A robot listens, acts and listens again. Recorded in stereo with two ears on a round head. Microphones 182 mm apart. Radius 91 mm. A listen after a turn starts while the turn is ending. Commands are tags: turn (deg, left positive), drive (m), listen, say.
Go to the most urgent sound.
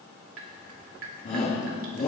<turn deg="45"/>
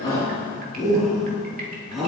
<drive m="1.0"/>
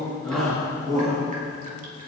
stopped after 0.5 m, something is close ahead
<say>Something is in my way. I am facing the shout but have not reached it.</say>